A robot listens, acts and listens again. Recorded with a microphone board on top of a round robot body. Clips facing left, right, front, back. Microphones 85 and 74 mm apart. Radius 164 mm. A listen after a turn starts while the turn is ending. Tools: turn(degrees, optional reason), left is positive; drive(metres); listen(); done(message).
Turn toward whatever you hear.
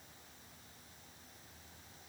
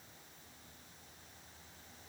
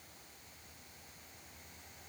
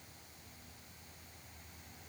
listen()
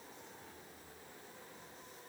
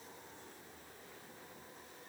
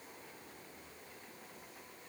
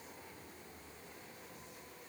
listen()
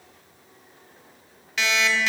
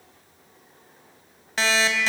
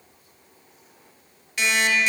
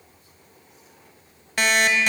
turn(degrees=-145, reason="The alarm clock: 145° right.")
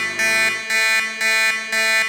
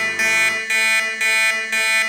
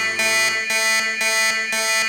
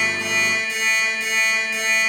turn(degrees=15, reason="The alarm clock is now 15° left.")
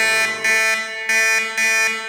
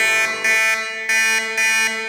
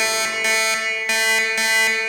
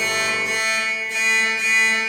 done("Found it: an alarm clock, straight ahead, 1 to 2 m away.")